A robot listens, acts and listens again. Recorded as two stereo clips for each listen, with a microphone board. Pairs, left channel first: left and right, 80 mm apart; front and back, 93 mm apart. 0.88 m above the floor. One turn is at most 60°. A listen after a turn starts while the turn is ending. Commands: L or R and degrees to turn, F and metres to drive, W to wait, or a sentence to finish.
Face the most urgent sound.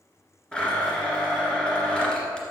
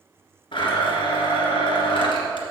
W
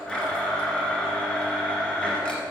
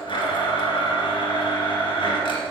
W
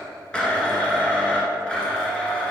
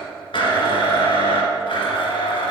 I can't make out anything urgent to turn to.